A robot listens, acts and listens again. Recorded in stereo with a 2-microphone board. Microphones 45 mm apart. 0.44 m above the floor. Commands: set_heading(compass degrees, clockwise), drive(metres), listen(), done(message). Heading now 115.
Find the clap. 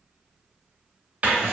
listen()
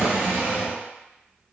listen()
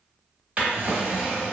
done("I can't make out a clap to turn to.")